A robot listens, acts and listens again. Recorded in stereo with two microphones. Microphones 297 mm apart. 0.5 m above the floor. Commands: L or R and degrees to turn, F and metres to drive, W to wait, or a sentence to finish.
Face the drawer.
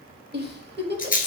W
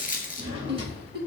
R20
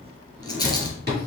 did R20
R145
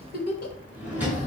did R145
Facing the drawer.